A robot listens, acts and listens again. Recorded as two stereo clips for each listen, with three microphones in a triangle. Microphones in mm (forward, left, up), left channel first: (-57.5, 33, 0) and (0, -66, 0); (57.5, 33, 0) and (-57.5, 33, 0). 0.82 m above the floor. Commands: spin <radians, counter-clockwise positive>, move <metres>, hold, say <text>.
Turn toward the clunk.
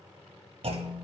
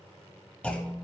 spin -1.31
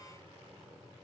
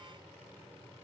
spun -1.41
say Facing where the clunk came from. I can't hear it now.